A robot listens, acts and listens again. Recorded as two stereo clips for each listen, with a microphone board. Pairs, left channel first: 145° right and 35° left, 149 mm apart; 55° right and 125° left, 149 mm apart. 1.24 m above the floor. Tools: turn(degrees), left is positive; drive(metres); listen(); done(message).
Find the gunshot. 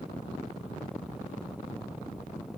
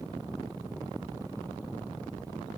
listen()
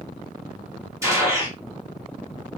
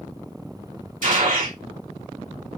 turn(degrees=105)
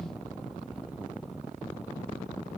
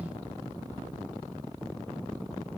done("Facing where the gunshot came from. I can't hear it now.")